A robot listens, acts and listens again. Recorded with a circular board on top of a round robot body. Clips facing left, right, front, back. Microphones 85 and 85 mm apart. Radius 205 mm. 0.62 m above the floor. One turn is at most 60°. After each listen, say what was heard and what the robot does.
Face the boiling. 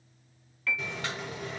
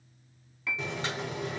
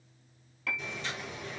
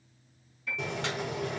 The boiling: 155° right. Turn 60° right.
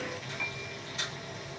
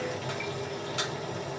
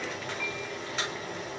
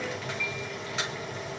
The boiling is now 90° right. Turn 60° right.
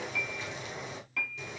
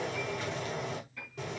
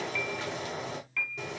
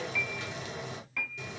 The boiling is now 45° right. Turn 45° right.
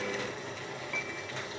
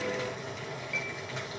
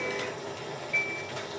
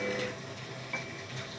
Found it: boiling, straight ahead.